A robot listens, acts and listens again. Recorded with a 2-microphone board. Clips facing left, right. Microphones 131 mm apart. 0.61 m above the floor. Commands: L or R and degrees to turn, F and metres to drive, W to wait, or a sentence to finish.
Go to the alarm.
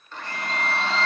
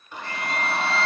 L20
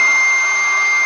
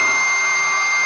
L140
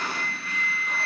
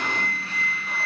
R35
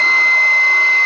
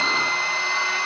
F1.0
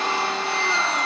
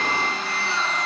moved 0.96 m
L15
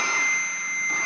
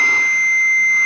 F1.0
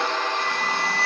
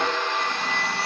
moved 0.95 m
F1.0
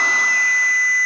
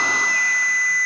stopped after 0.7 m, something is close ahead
L10
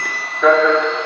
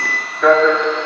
I am next to the alarm.